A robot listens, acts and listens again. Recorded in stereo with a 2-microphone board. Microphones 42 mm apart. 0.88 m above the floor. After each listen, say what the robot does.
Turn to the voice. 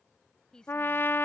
Turn 15° left.
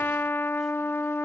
Keep listening.
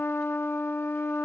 Keep listening.
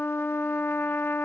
I heard a woman speaking, but can't make it out now. It was about straight ahead or 150° left.